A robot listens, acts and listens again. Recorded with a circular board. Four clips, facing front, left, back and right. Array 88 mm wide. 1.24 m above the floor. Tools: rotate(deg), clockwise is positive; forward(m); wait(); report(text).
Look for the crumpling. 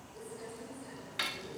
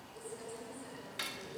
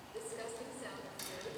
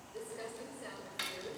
rotate(140)
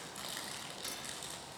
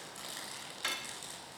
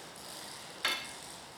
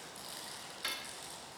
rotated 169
rotate(-25)
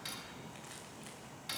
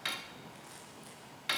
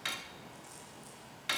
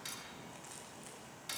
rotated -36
rotate(10)
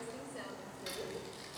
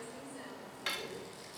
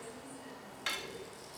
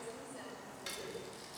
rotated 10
report("Found it: crumpling, straight ahead.")